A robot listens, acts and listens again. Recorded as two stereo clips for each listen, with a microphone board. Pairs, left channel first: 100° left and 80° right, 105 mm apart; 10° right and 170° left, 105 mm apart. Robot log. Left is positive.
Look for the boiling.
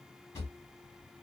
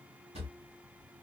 cmd idle
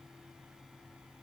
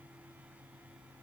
cmd idle
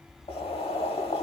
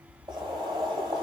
note: The boiling: 125° left.
cmd yaw +125
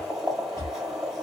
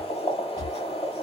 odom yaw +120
note: The boiling is now 10° left.
cmd yaw +10
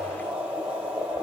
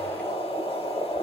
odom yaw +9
end: Found it: boiling, straight ahead, 1 to 2 m away.